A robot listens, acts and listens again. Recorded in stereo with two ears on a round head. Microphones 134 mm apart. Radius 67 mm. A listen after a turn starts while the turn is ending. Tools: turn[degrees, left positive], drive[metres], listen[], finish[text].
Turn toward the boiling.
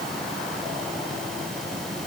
Action: listen[]
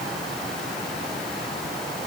Action: listen[]
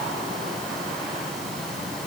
Action: finish[I can't make out boiling.]